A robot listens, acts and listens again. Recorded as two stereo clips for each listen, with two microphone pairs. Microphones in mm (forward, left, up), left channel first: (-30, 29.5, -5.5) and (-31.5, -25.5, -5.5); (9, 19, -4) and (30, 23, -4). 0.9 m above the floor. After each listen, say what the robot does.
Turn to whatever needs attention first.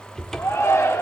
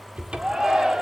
Turn 60° left.
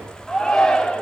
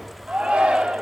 Turn 10° left.
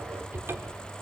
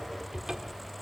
Keep listening.
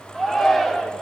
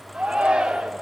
Facing the shout.